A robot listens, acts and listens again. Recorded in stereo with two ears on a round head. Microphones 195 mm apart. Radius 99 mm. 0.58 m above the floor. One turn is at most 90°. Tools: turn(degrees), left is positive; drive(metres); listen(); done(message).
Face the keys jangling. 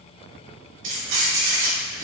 turn(degrees=-70)
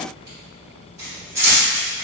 turn(degrees=-10)
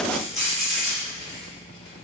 done("Found it: keys jangling, straight ahead, 2 to 4 m away.")